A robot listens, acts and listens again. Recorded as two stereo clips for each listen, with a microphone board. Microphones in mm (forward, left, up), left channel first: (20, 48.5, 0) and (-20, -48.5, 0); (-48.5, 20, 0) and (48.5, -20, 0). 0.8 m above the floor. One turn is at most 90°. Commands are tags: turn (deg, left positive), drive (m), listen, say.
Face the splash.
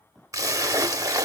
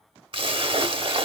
<turn deg="-55"/>
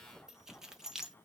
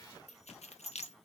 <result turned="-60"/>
<say>I heard a splash from this way, but can't make it out now.</say>